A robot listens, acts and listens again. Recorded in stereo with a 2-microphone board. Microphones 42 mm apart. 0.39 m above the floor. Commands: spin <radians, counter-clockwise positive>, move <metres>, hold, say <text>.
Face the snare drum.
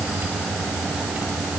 hold
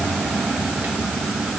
hold
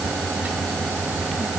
say I can't make out a snare drum.